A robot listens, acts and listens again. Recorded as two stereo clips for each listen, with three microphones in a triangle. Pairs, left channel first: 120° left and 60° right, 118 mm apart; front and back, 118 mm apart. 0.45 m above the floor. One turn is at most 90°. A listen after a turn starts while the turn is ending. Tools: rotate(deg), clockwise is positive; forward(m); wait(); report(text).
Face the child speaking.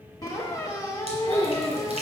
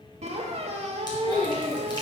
rotate(90)
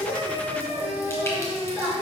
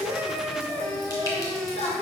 rotate(-15)
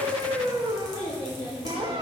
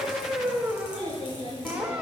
report("Found it: a child speaking, straight ahead.")